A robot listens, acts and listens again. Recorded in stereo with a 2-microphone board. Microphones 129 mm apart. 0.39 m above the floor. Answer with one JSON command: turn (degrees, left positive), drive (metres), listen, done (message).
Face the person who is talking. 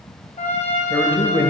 {"turn": 15}
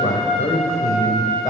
{"turn": 150}
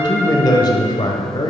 {"turn": 40}
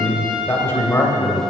{"turn": 25}
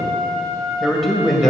{"done": "Facing the man speaking."}